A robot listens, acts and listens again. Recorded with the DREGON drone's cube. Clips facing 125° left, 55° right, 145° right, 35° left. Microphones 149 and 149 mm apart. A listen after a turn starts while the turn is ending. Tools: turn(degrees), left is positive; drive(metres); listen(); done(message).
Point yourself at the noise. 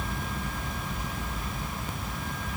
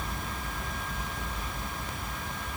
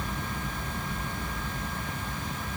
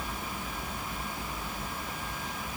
listen()
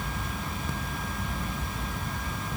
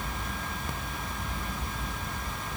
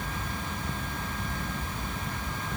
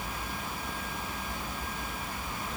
listen()
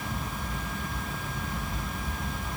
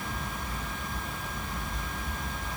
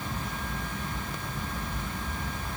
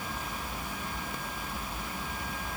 done("I can't make out anything.")